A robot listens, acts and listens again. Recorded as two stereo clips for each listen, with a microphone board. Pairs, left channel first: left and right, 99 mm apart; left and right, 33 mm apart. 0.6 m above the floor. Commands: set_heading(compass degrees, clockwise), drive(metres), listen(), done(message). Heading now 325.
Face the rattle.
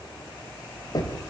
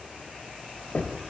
listen()
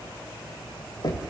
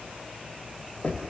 listen()
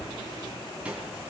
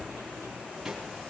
set_heading(355)
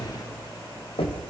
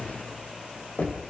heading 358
listen()
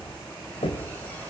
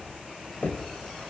listen()
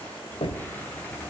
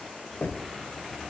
done("I heard a rattle, but can't make it out now. It was about 20° left or 135° right.")